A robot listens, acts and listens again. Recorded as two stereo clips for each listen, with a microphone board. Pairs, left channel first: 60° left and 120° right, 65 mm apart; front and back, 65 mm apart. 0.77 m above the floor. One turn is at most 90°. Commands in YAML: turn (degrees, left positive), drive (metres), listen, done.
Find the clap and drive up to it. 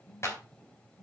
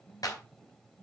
turn: 15
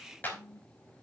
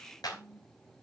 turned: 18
drive: 1.0
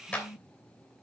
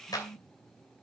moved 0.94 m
turn: -10
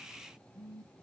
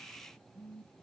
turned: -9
listen: true
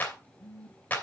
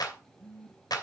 drive: 1.0
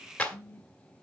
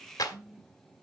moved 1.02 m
turn: -10
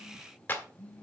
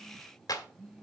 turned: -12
drive: 1.0
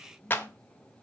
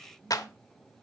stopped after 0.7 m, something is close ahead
done: "Arrived at the clap, straight ahead."